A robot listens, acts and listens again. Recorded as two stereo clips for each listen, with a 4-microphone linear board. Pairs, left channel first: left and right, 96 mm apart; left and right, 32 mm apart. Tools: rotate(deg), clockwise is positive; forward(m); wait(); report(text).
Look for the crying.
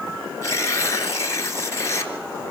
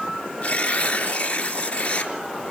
wait()
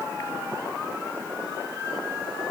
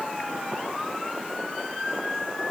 wait()
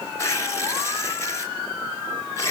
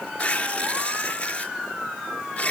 report("I can't make out crying, only tearing paper.")